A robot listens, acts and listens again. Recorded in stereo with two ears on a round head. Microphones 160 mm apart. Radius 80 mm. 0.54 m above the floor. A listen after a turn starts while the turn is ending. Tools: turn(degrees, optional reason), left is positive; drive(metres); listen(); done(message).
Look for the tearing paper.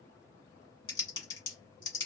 listen()
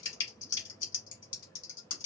listen()
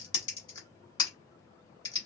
done("I can't make out tearing paper, only typing on a keyboard.")